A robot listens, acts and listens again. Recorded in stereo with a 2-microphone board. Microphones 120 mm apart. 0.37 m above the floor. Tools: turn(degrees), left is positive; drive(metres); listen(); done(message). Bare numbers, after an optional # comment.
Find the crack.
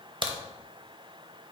# The crack: about 45° right or 135° right.
turn(-45)
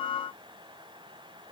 listen()
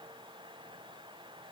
done("I heard a crack, but can't make it out now. It was about straight ahead or 90° right.")